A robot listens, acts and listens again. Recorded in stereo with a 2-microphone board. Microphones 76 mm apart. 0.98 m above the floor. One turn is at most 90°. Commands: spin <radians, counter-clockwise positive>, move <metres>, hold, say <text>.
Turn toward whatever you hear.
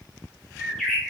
spin 0.52
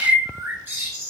spin -0.44
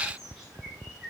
hold
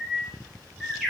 say Facing the bird.